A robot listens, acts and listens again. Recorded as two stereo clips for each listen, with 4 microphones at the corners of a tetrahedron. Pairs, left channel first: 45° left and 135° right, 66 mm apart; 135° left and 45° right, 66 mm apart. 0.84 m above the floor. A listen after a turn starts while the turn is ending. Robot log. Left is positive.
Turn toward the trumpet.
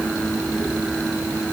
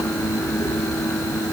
cmd idle
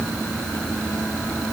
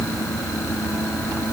cmd idle
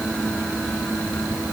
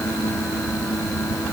end: I can't make out a trumpet.